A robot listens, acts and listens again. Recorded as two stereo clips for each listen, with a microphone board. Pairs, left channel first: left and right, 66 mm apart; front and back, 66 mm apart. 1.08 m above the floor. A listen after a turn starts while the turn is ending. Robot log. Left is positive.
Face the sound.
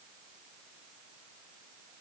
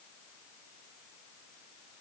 cmd idle
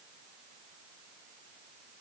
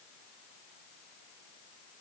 cmd idle
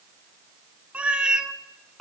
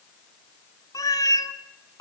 note: The cat meowing: 10° right.
cmd yaw -10
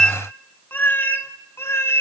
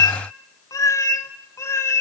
note: The cat meowing is now 40° left.
cmd yaw +40
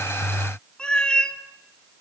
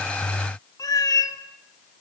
note: The cat meowing is now 15° left.
cmd yaw +15
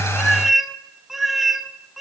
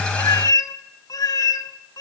end: Facing the cat meowing, 1 to 2 m away.